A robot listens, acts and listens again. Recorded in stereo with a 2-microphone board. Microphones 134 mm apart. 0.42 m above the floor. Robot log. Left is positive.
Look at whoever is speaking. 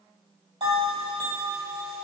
cmd idle
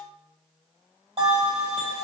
cmd idle
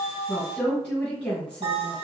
cmd yaw +30
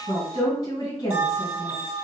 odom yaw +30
note: So it is at 140° left.
cmd yaw +140
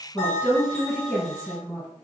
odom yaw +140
end: Found it: a woman speaking, straight ahead, 1 to 2 m away.